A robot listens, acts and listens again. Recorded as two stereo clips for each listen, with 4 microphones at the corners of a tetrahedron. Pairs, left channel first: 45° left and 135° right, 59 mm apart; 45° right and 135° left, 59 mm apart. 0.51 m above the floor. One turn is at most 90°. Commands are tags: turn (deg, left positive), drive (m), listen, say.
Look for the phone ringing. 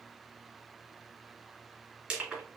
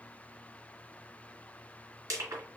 <listen/>
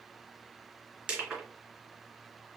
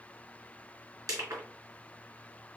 <listen/>
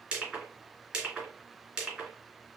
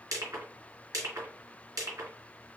<say>I can't make out a phone ringing to turn to.</say>